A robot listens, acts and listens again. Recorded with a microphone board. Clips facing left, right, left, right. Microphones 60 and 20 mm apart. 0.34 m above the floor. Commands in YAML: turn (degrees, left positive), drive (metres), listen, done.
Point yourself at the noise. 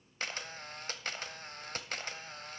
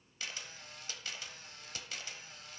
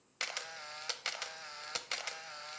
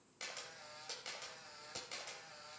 turn: 55
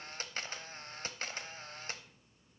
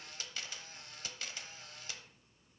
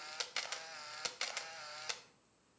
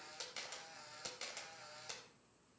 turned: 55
turn: 55
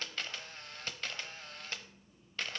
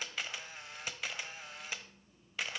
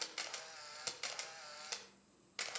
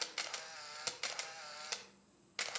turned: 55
turn: -10
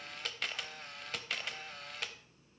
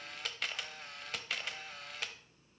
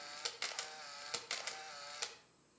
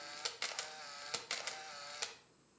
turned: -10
done: "Facing the camera shutter, under 1 m away."